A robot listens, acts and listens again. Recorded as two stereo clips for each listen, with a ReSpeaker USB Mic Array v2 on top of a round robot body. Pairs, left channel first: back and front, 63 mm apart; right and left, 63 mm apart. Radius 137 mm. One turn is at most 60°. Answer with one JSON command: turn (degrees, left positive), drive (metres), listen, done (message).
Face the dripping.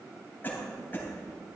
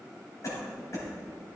{"listen": true}
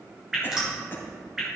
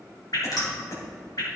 {"turn": -60}
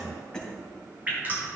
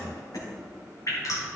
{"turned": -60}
{"turn": -60}
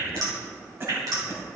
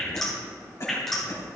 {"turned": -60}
{"done": "Found it: dripping, straight ahead, 2 to 4 m away."}